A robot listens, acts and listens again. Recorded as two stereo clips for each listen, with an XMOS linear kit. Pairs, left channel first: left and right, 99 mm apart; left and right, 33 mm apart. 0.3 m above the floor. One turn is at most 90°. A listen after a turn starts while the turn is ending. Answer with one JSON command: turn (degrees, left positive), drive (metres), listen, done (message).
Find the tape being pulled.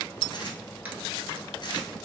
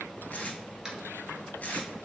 {"turn": 55}
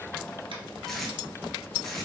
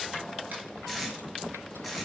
{"done": "Facing the tape being pulled, under 1 m away."}